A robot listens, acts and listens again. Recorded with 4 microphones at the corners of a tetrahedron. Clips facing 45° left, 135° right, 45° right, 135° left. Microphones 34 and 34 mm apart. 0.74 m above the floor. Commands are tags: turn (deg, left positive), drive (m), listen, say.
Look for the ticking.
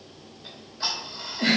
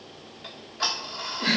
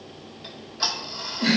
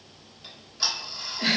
<turn deg="-120"/>
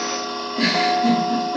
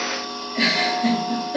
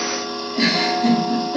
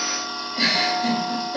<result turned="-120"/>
<turn deg="30"/>
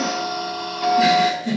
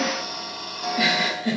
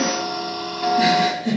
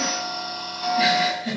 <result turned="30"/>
<say>Facing the ticking.</say>